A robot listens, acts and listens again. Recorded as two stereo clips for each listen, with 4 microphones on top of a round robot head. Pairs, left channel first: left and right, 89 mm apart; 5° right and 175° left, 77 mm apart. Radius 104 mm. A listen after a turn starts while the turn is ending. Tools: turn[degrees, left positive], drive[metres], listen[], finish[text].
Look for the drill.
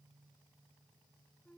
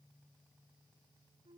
Action: listen[]
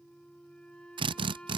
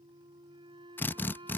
Thought: The drill: 70° right.
Action: turn[-70]
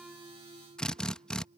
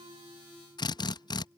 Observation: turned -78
Thought: The drill is now 10° left.
Action: turn[10]
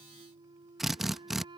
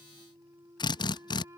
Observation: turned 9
Action: finish[Found it: a drill, straight ahead.]